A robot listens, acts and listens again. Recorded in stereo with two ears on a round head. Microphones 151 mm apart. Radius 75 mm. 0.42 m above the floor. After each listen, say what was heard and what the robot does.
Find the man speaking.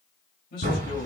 The man speaking: about 60° left or 120° left. Turn 60° left.
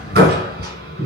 Keep listening.
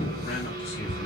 Keep listening.
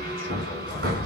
I heard a man speaking, but can't make it out now. It was about straight ahead or 60° left.